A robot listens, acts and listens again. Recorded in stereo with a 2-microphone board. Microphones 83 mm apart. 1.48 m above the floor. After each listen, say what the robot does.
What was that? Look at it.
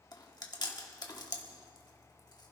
Turn 55° left.
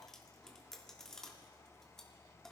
Turn 10° left.
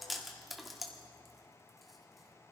Facing the chewing, 1 to 2 m away.